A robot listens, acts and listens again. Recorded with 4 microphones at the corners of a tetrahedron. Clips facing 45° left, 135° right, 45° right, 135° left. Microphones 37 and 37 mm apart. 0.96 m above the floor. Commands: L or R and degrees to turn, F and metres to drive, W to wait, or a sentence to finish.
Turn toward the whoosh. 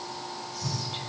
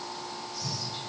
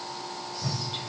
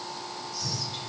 R45
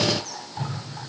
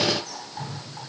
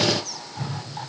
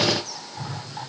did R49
Facing the whoosh, 1 to 2 m away.